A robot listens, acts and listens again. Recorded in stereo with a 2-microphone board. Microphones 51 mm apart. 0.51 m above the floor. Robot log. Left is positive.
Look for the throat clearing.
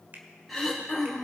cmd yaw +30
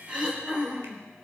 note: So it is at 30° right.
cmd yaw -30
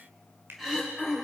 note: The throat clearing is now 10° right.
cmd yaw -10
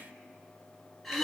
end: Facing the throat clearing, 2 to 4 m away.